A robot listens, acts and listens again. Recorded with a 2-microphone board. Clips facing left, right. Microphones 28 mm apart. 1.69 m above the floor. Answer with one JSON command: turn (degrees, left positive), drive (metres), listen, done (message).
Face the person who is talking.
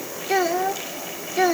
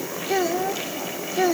{"turn": 20}
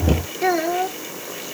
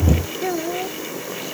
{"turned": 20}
{"turn": 140}
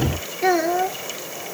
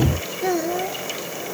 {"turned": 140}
{"turn": 35}
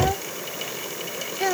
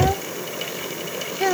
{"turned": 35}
{"done": "Found it: a child speaking, straight ahead."}